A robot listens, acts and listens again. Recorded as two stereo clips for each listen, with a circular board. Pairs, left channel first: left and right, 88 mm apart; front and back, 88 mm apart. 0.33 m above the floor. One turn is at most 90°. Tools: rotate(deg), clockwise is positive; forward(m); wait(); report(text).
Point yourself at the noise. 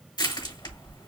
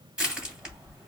rotate(-90)
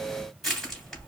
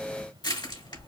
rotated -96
report("Facing the crushing.")